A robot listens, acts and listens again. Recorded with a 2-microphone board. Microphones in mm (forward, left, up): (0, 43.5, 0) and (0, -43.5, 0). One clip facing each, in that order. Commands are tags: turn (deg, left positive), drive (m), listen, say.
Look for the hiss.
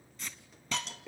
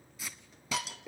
<turn deg="-30"/>
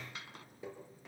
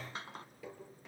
<turn deg="-145"/>
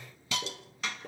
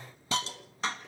<turn deg="-35"/>
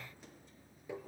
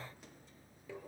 <listen/>
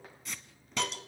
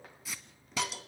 <say>Facing the hiss.</say>